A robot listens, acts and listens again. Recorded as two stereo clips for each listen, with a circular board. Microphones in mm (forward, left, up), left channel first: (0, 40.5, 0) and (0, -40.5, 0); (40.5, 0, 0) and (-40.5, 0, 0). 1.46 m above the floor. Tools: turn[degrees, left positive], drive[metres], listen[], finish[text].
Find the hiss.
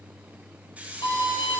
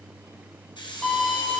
Thought: The hiss: 15° right.
Action: turn[-15]
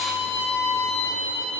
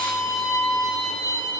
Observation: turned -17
Action: listen[]
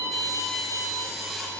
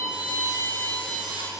Action: listen[]
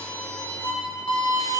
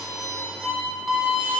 Action: finish[Facing where the hiss came from. I can't hear it now.]